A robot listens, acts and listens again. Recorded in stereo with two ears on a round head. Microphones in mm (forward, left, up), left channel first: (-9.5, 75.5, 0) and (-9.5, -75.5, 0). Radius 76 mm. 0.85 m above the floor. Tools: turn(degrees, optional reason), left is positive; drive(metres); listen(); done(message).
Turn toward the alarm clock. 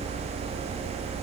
listen()
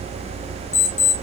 turn(degrees=40, reason="The alarm clock: about 40° left or 140° left.")
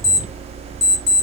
done("Facing the alarm clock.")